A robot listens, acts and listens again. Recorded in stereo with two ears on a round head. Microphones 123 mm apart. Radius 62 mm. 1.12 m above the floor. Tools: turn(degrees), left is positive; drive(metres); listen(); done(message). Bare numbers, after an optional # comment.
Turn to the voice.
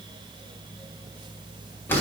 listen()
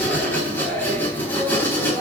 listen()
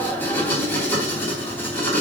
done("I can't make out anyone speaking, only writing.")